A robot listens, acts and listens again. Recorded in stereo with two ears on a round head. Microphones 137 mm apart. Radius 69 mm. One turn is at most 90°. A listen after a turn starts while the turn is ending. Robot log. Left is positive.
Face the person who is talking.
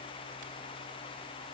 cmd idle
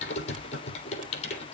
cmd idle
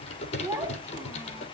note: The child speaking: about 20° right or 160° right.
cmd yaw -20
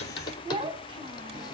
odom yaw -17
note: So it is at 145° right.
cmd yaw -90
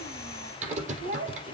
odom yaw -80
note: The child speaking is now 65° right.
cmd yaw -65
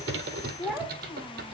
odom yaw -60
end: Found it: a child speaking, straight ahead, 2 to 4 m away.